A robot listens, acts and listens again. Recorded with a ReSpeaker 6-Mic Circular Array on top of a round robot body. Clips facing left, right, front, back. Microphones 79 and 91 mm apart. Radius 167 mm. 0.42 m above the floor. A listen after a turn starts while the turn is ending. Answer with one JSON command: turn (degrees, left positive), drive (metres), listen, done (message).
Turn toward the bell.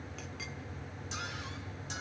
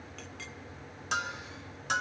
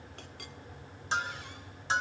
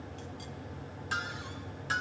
{"turn": -65}
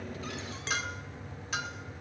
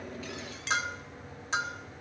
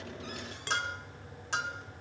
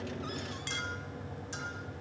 {"turn": -30}
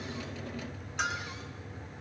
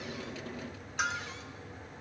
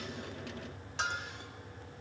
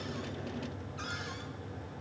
{"done": "Facing the bell, 2 to 4 m away."}